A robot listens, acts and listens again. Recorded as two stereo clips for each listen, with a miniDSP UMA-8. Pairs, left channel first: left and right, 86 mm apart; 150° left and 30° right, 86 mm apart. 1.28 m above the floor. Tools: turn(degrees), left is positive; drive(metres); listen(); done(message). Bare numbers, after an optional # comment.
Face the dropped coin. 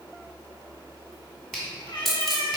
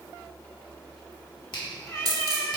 done("Facing the dropped coin, 1 to 2 m away.")